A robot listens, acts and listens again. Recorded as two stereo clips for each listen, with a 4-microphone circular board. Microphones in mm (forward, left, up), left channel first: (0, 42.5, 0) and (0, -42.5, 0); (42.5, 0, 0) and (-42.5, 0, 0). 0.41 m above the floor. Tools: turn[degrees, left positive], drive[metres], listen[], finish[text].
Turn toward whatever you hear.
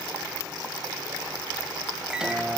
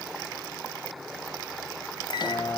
Thought: The microwave: 10° right.
Action: turn[-10]
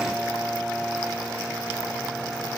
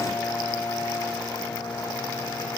Action: finish[Facing the microwave.]